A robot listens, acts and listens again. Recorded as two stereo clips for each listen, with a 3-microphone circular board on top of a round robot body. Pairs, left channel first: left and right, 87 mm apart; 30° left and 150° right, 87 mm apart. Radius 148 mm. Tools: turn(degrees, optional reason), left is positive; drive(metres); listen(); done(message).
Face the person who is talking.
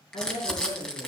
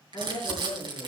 turn(degrees=80, reason="The woman speaking: 80° left.")
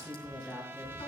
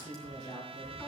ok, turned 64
turn(degrees=20, reason="The woman speaking is now 20° left.")
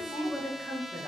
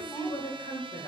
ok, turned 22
done("Found it: a woman speaking, straight ahead.")